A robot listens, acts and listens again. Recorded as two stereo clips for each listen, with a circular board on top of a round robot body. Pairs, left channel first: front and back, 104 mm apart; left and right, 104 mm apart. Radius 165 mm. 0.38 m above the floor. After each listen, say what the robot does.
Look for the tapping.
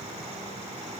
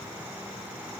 Keep listening.
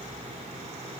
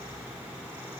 Keep listening.
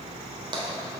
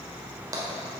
Turn 145° right.
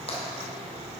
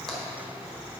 Keep listening.
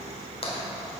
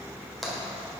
Found it: tapping, straight ahead, 1 to 2 m away.